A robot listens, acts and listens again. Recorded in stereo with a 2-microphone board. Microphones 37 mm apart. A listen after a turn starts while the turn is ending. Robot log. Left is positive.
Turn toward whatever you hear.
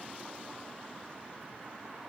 cmd idle
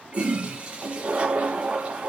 note: The toilet flushing: about 35° right or 145° right.
cmd yaw -35
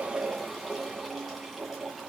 end: Facing the toilet flushing, 2 to 4 m away.